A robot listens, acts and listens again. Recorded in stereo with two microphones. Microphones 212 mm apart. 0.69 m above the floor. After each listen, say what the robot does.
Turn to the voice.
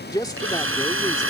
Turn 20° left.
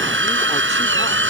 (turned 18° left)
Keep listening.
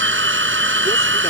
Keep listening.
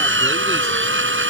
I heard a man speaking, but can't make it out now. It was about straight ahead or 145° left.